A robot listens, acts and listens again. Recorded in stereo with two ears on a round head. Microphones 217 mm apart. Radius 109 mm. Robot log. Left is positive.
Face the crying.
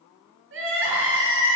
note: The crying: about 55° right or 125° right.
cmd yaw -55
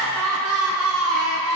note: So it is at 70° right.
cmd yaw -70
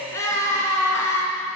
note: The crying is now 10° left.
cmd yaw +10
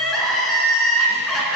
end: Facing the crying.